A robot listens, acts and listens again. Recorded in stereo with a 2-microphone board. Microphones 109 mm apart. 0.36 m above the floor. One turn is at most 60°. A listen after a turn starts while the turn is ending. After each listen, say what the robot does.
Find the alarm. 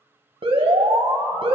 Turn 60° right.
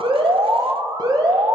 Turn 50° right.
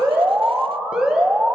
Turn 10° right.
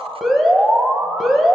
Facing the alarm.